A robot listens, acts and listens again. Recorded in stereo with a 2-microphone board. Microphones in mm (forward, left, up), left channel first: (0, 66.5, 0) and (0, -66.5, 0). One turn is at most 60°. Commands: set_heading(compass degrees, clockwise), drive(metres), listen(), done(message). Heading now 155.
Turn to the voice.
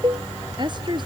set_heading(195)
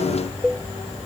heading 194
listen()
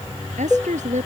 set_heading(254)
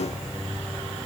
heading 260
set_heading(300)
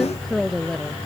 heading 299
done("Found it: a woman speaking, straight ahead.")